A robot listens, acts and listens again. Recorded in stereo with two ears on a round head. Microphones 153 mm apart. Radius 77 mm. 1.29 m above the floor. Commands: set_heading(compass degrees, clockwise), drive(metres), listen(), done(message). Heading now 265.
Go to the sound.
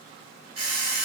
set_heading(300)
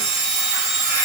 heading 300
drive(1.0)
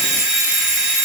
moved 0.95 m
drive(1.0)
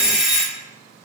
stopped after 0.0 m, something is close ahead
done("I am next to the alarm clock.")